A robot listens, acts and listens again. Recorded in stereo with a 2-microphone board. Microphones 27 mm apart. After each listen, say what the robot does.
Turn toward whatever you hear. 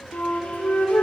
Turn 90° left.
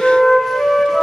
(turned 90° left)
Found it: a flute, straight ahead.